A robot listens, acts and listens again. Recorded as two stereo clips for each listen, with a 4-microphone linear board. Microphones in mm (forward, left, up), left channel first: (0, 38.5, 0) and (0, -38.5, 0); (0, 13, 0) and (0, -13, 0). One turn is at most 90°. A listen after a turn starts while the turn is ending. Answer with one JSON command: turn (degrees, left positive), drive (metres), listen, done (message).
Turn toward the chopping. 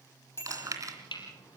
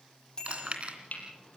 {"turn": 90}
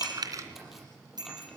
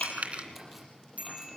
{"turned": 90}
{"listen": true}
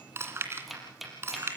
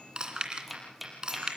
{"done": "Found it: chopping, straight ahead, over 4 m away."}